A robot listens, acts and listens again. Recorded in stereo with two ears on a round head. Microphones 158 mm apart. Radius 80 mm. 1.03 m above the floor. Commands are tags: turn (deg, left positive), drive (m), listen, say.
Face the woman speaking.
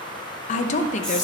<turn deg="45"/>
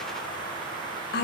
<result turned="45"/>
<turn deg="85"/>
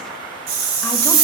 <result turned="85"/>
<listen/>
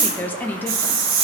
<turn deg="10"/>
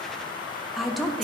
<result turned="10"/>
<say>Facing the woman speaking, under 1 m away.</say>